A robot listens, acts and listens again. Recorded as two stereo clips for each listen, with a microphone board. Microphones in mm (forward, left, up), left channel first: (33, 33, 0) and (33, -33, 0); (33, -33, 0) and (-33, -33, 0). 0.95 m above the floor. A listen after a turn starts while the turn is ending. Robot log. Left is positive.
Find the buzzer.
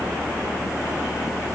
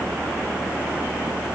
cmd idle
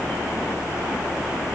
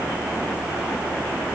cmd idle
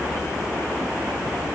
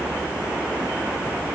end: I can't make out a buzzer to turn to.